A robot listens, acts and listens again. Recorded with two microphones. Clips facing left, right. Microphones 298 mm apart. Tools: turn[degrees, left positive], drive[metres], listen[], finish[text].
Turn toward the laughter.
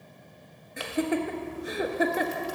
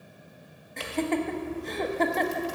Action: turn[30]
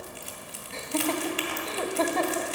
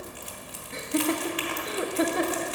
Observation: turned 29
Thought: So it is at 20° right.
Action: turn[-20]
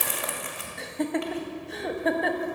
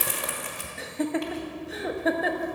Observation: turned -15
Action: finish[Facing the laughter.]